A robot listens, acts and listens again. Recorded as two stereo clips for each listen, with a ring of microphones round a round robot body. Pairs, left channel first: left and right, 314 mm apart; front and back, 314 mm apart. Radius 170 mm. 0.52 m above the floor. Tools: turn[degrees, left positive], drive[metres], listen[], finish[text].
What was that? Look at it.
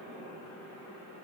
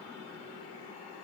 Action: listen[]
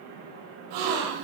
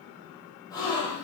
Thought: The gasp: 80° right.
Action: turn[-80]
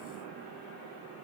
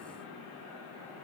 Action: finish[Facing where the gasp came from. I can't hear it now.]